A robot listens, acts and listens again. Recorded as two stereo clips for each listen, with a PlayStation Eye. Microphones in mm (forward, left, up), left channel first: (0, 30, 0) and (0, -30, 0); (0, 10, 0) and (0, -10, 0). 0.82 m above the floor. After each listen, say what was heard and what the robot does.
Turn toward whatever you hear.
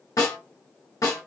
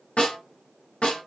Turn 90° left.
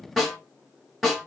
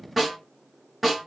Facing the snare drum, 1 to 2 m away.